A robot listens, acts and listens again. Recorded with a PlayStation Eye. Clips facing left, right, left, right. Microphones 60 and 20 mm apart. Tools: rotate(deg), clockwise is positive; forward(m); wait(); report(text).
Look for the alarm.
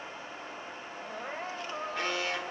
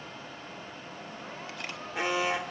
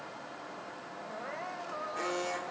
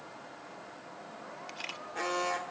rotate(30)
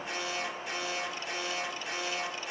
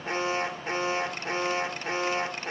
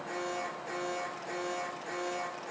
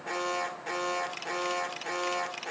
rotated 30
rotate(135)
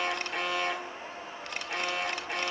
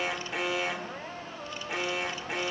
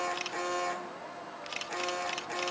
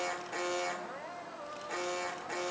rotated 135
report("Facing the alarm, 2 to 4 m away.")